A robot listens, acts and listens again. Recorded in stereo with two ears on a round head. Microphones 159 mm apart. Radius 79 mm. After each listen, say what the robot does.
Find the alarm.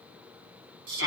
Keep listening.
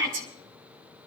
Keep listening.
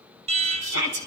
Turn 35° right.
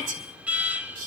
Turn 10° right.
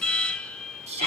Facing the alarm, under 1 m away.